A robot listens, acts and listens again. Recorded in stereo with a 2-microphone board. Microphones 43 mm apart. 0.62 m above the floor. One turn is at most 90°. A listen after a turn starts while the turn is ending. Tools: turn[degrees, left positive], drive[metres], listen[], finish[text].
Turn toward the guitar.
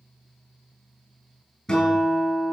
Action: turn[30]
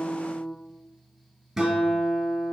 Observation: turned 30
Thought: So it is at 15° right.
Action: turn[-15]
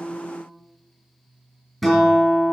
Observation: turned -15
Action: finish[Found it: a guitar, straight ahead.]